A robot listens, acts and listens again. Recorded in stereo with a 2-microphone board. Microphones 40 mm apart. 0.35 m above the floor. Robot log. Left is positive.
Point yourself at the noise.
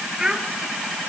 cmd yaw -30
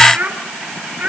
note: So it is at 145° right.
cmd yaw -145
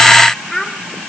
note: The child speaking is now 10° left.
cmd yaw +10
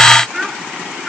note: The child speaking is now 10° right.
cmd yaw -10
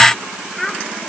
end: Found it: a child speaking, straight ahead, 2 to 4 m away.